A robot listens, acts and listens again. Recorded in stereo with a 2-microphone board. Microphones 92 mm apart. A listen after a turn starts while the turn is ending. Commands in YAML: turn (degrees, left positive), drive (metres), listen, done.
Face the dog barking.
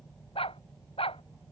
turn: 90
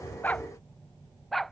done: "Found it: a dog barking, straight ahead."